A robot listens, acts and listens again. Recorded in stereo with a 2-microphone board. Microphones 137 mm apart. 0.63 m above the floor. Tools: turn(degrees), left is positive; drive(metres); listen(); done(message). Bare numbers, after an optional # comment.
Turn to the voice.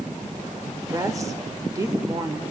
# The woman speaking: about 25° right or 155° right.
turn(-25)
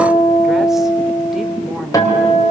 listen()
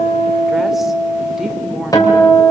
listen()
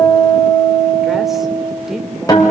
done("I heard a woman speaking, but can't make it out now. It was about straight ahead or 130° right.")